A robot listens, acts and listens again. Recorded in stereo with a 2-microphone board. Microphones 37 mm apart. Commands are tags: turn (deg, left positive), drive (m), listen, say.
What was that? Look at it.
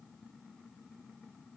<listen/>
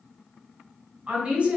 <turn deg="-35"/>
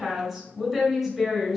<say>Facing the woman speaking, 1 to 2 m away.</say>